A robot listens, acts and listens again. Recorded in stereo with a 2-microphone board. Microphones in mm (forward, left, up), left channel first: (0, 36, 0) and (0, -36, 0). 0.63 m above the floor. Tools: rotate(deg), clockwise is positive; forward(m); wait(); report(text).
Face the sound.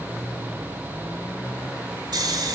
rotate(65)
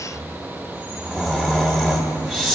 report("Facing the snoring, 1 to 2 m away.")